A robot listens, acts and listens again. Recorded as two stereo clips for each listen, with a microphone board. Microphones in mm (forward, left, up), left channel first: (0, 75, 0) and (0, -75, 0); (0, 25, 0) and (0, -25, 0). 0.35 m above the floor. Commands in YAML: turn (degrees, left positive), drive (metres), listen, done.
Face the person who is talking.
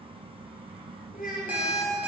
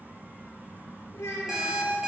turn: 75
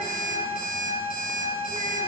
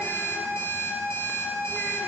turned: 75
listen: true
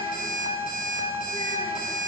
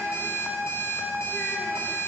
listen: true
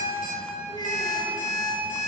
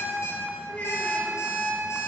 turn: 30
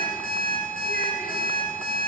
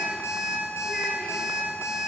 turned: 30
listen: true
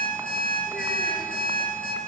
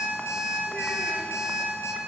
listen: true
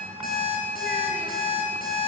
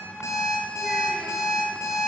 done: "Facing where the child speaking came from. I can't hear it now."